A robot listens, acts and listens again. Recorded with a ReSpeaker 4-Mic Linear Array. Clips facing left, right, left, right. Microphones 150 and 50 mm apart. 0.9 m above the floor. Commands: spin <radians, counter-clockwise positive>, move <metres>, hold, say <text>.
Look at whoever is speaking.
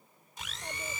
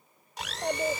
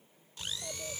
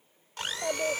spin -1.22
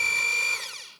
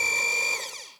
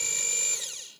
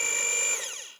hold
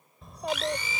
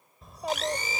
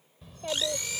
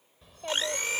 say Found it: a child speaking, straight ahead.